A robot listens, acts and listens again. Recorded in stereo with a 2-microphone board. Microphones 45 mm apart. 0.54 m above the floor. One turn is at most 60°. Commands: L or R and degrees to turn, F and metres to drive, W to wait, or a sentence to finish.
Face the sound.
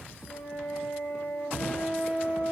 L60
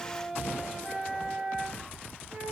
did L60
Facing the flute.